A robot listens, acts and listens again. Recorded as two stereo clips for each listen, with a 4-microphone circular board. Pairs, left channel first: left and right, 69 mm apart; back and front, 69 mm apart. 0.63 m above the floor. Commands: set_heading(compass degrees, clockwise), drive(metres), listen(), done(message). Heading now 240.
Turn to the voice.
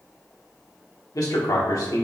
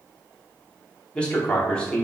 set_heading(135)
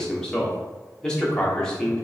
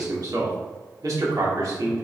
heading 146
set_heading(136)
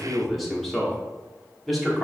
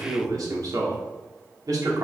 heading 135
done("Found it: a man speaking, straight ahead.")